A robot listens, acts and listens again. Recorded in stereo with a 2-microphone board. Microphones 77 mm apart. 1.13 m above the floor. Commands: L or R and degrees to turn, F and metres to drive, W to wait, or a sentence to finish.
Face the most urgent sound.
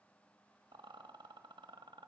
W
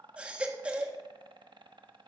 R30
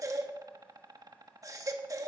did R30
R135
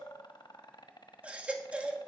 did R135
R15
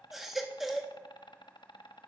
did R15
Found it: a baby crying, straight ahead.